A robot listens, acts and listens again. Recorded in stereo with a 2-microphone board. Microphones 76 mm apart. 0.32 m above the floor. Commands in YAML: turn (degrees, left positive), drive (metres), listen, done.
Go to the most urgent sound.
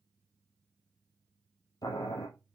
listen: true
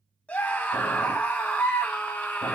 turn: 20
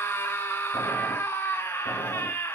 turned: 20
turn: 135
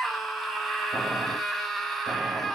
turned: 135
drive: 1.0
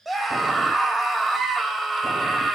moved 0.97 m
drive: 1.0
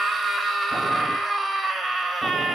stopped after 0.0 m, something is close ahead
done: "Arrived at the scream, straight ahead."